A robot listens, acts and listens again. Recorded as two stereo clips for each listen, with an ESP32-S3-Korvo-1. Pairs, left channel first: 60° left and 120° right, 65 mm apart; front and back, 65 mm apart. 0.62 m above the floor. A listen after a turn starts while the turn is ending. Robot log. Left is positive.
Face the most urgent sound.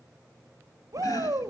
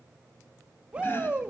note: The shout: 110° right.
cmd yaw -110
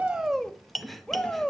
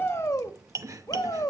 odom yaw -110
note: The shout is now 15° right.
cmd yaw -15
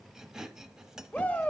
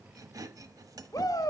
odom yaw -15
end: Facing the shout, 1 to 2 m away.